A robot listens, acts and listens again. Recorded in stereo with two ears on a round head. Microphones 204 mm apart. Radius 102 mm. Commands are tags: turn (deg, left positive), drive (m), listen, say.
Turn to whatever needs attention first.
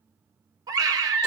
<turn deg="-20"/>
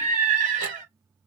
<turn deg="-140"/>
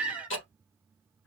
<say>Facing the scream.</say>